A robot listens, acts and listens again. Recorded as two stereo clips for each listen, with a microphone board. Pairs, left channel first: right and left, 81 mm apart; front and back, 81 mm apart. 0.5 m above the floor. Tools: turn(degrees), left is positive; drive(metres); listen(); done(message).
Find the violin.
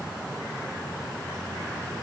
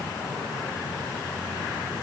listen()
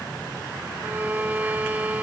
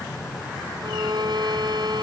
turn(degrees=160)
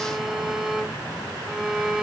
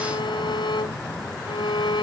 done("Found it: a violin, straight ahead.")